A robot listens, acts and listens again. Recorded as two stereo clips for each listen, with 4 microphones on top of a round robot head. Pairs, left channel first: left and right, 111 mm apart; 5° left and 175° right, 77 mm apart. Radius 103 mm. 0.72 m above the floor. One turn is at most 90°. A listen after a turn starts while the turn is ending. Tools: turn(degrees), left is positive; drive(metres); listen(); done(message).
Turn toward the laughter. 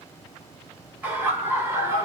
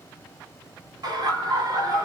turn(degrees=-90)
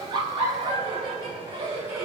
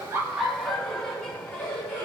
turn(degrees=-40)
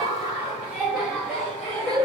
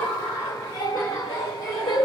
done("Found it: laughter, straight ahead.")